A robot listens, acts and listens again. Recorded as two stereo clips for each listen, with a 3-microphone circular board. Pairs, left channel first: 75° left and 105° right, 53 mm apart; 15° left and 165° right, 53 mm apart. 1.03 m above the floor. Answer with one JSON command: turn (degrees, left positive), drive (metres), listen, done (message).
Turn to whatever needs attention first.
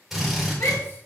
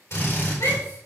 {"turn": 35}
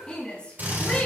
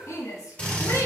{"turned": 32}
{"done": "Facing the shout."}